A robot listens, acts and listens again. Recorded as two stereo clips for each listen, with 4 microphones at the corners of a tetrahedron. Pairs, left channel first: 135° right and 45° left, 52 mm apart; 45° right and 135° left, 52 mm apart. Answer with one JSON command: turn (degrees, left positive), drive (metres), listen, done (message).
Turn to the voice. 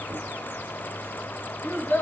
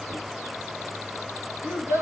{"turn": 170}
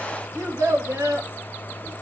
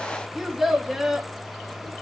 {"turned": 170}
{"turn": 45}
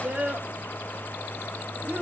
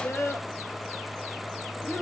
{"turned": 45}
{"turn": -10}
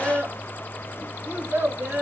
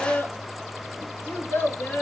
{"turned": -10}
{"done": "Found it: a child speaking, straight ahead, 2 to 4 m away."}